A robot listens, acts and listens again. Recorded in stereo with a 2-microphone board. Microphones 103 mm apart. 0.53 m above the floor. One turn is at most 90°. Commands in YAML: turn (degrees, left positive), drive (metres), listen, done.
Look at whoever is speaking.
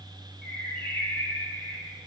listen: true
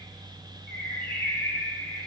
listen: true
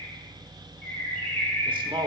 turn: -50
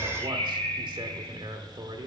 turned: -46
turn: -65
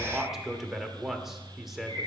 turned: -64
done: "Found it: a man speaking, straight ahead."